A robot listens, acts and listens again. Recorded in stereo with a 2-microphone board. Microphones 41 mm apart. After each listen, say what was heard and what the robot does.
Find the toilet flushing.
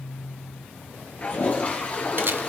The toilet flushing: about 35° left or 145° left. Turn 35° left.
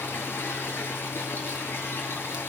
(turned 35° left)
So it is at 110° left. Turn 110° left.
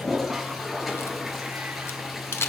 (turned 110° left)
Facing the toilet flushing.